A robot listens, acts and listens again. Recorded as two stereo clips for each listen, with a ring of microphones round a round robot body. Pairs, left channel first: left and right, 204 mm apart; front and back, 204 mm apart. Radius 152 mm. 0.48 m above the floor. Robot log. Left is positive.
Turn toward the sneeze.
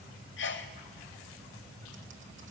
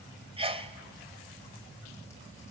note: The sneeze: 120° left.
cmd yaw +120
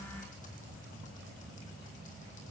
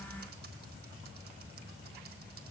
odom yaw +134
note: Nothing new. It was at 15° right.
cmd yaw -15
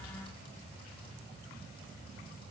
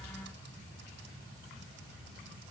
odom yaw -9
end: I heard a sneeze from this way, but can't make it out now.